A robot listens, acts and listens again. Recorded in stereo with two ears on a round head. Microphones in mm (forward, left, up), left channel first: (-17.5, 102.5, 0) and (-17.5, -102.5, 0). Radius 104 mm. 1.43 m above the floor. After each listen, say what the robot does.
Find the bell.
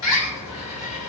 Keep listening.
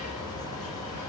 Keep listening.
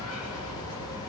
I can't make out a bell, only a bird.